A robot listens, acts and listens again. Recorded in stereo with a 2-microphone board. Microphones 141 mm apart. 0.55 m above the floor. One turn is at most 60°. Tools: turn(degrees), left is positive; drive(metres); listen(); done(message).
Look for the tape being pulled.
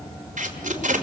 turn(degrees=-60)
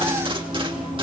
turn(degrees=-40)
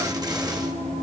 listen()
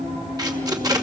turn(degrees=-30)
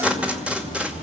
turn(degrees=-10)
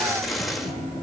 done("Facing the tape being pulled, 2 to 4 m away.")